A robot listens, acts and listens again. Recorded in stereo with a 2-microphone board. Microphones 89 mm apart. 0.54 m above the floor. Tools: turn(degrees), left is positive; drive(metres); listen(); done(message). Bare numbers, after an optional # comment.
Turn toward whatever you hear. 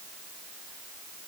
listen()
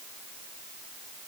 listen()
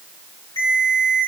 # The ringtone: about 50° left or 130° left.
turn(50)
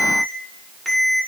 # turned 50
done("Facing the ringtone.")